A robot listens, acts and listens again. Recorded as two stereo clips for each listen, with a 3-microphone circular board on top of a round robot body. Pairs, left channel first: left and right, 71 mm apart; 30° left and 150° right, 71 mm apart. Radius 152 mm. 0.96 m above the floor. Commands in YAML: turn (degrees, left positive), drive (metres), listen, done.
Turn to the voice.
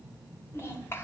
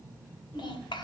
turn: 30
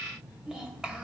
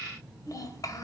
turn: -10
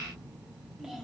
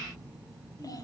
turn: -10
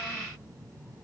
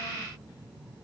listen: true
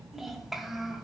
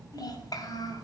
done: "Facing the child speaking."